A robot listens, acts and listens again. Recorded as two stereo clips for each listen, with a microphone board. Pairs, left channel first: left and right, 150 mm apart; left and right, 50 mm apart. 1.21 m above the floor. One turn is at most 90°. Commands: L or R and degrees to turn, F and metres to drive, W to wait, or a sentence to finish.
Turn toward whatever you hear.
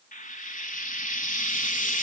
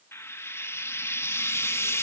L65
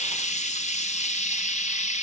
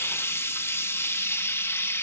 L50
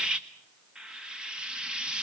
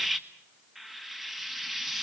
Facing the frying, 1 to 2 m away.